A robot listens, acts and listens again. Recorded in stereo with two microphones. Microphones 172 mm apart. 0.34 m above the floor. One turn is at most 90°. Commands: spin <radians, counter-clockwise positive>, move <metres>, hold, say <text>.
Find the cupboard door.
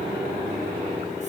hold
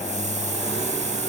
hold
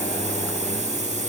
say I can't make out a cupboard door, only a hiss.